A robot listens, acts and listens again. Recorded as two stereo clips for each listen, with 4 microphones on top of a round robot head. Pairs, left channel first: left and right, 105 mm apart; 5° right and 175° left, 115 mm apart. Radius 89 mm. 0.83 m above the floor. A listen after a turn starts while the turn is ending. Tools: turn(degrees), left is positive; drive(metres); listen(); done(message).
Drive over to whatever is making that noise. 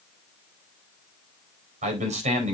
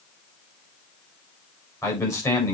turn(degrees=-75)
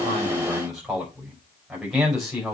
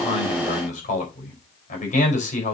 drive(metres=1.0)
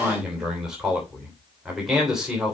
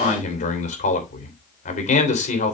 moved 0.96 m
drive(metres=1.0)
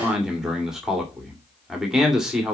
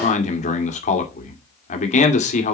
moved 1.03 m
drive(metres=1.0)
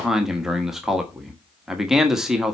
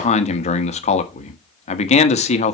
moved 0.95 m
drive(metres=1.0)
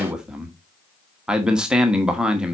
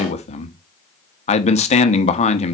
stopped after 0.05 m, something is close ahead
done("I am next to the man speaking.")